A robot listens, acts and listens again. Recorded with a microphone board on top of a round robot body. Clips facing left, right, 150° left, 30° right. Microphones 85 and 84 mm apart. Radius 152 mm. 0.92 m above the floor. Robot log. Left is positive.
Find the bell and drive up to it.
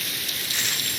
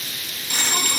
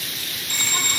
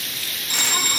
note: The bell: 105° right.
cmd yaw -105
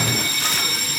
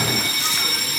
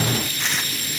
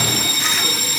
cmd fwd 1.0
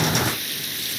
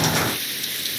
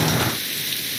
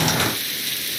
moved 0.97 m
cmd idle
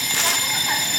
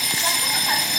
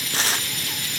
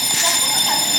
cmd fwd 1.0
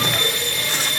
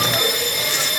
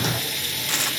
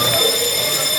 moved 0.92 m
note: The bell is now 15° right.
cmd yaw -15
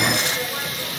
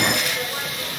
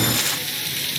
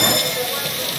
cmd idle
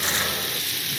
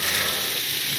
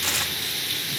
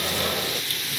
cmd idle
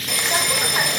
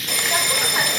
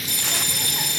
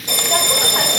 cmd fwd 1.0
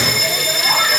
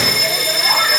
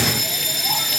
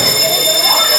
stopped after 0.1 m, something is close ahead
end: Arrived at the bell, straight ahead.